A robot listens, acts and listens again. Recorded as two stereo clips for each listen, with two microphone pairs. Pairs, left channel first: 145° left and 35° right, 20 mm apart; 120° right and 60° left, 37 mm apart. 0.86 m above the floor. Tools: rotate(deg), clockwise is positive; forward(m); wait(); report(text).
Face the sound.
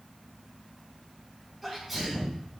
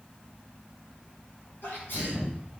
rotate(125)
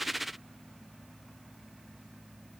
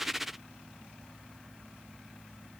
report("Facing where the sneeze came from. I can't hear it now.")